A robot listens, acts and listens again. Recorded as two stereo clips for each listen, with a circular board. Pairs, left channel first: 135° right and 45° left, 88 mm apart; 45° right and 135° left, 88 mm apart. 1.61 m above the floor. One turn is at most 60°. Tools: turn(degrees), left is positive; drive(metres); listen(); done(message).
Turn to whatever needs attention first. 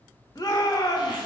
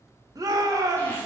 turn(degrees=60)
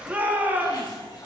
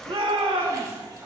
turn(degrees=60)
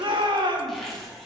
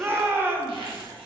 turn(degrees=60)
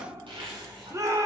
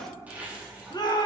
done("Found it: a shout, straight ahead, 2 to 4 m away.")